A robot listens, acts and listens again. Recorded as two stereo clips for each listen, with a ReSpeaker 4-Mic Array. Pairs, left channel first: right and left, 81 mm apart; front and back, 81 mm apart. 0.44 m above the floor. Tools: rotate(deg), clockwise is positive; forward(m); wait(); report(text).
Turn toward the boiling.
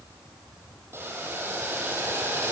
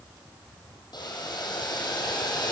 rotate(-30)
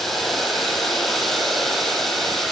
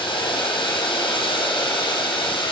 report("Found it: boiling, straight ahead, over 4 m away.")